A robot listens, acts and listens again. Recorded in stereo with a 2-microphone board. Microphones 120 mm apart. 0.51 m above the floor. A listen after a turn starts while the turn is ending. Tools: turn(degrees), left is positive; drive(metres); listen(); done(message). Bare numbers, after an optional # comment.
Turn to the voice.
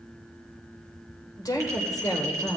# The woman speaking: about 30° left or 150° left.
turn(30)
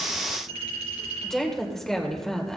done("Facing the woman speaking.")